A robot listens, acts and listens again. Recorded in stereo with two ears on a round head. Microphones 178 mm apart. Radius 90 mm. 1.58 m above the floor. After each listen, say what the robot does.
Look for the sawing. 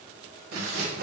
Turn 50° right.
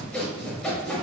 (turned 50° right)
Facing the sawing.